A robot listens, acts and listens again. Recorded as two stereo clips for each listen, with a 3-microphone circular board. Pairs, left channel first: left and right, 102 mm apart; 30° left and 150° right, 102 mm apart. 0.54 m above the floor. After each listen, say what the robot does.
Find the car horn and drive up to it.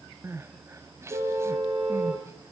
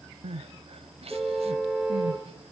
Turn 60° right.
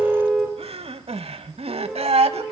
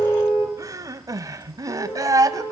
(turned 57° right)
Drive 1.0 m forward.
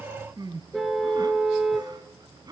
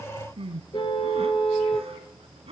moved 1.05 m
Drive 1.0 m forward.
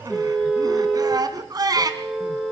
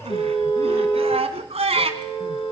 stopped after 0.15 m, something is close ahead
Blocked. The car horn is further on, straight ahead.